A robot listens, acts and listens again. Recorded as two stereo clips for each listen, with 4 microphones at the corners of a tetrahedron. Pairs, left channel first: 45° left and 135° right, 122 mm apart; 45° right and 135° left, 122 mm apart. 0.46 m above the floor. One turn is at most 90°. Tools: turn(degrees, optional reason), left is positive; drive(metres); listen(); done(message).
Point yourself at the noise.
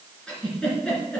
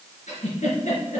turn(degrees=-35, reason="The giggle: 35° right.")
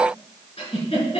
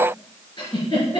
done("Facing the giggle, 2 to 4 m away.")